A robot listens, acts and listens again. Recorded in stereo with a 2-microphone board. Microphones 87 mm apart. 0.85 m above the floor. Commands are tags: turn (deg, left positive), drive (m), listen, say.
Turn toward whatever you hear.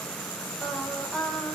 <turn deg="30"/>
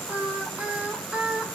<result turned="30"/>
<turn deg="-15"/>
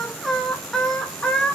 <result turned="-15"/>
<turn deg="10"/>
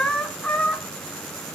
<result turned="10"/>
<turn deg="20"/>
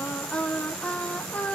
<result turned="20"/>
<turn deg="15"/>
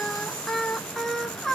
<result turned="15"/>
<say>Found it: singing, straight ahead.</say>